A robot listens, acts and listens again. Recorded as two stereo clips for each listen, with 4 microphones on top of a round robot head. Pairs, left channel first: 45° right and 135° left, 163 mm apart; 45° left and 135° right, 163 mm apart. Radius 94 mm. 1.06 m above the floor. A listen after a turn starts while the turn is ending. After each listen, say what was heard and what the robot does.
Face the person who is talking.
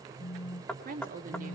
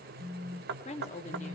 The woman speaking: 95° left. Turn 95° left.
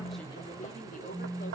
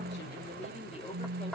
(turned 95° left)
Keep listening.
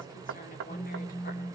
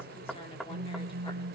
Keep listening.
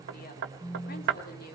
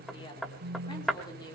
The woman speaking is now 20° right. Turn 20° right.
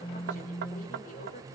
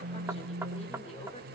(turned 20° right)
Keep listening.
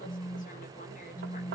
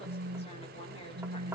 Keep listening.
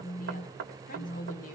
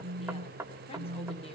Facing where the woman speaking came from. I can't hear it now.